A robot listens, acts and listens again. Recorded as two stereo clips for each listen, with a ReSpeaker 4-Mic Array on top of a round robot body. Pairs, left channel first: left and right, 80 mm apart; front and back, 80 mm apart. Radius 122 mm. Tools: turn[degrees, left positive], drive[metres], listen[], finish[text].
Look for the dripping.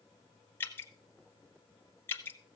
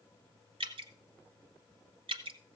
Thought: The dripping: 155° left.
Action: turn[155]
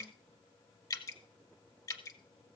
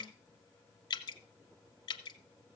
Thought: The dripping is now 40° left.
Action: turn[40]
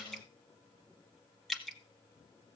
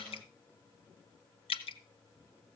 Action: finish[Facing the dripping.]